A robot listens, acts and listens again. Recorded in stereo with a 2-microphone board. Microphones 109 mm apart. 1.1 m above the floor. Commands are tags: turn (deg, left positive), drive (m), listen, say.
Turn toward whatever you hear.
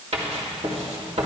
<turn deg="-75"/>
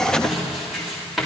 <say>Found it: writing, straight ahead, 2 to 4 m away.</say>